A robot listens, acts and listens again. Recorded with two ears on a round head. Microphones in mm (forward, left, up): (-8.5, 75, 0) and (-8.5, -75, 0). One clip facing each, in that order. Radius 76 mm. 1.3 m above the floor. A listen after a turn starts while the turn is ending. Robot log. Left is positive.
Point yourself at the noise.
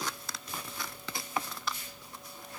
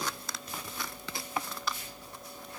cmd idle
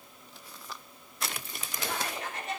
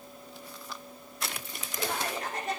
note: The laughter: about 35° right or 145° right.
cmd yaw -35
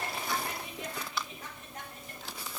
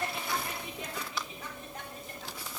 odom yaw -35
cmd idle
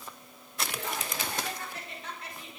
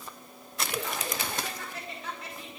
note: So it is at 105° right.
cmd yaw -105
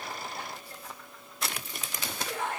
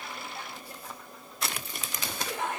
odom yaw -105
note: The laughter is now 20° right.
cmd yaw -20
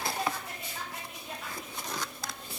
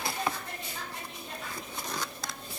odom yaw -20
end: Found it: laughter, straight ahead, over 4 m away.